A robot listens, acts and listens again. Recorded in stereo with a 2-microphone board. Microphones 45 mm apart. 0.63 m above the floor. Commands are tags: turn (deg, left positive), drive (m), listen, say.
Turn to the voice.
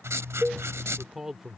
<turn deg="-30"/>
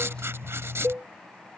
<listen/>
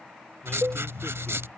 <listen/>
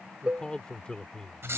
<turn deg="20"/>
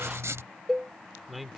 <say>Facing the man speaking.</say>